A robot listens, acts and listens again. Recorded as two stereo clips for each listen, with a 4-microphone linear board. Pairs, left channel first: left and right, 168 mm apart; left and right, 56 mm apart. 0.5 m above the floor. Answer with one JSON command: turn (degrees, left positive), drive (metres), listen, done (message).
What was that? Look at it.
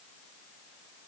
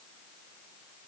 {"listen": true}
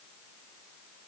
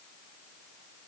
{"listen": true}
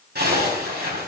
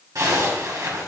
{"turn": -70}
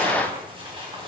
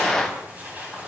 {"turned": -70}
{"turn": -35}
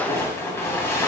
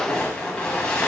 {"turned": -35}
{"turn": 15}
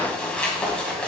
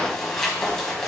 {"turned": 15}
{"done": "Facing the zipper, 2 to 4 m away."}